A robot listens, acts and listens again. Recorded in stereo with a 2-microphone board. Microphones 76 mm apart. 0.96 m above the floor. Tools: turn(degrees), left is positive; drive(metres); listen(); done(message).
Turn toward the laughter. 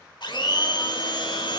listen()
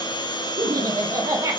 turn(degrees=-40)
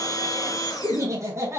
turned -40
turn(degrees=-35)
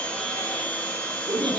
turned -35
turn(degrees=-125)
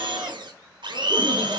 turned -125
listen()
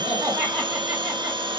turn(degrees=-20)
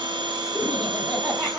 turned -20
listen()
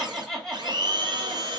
done("Found it: laughter, straight ahead.")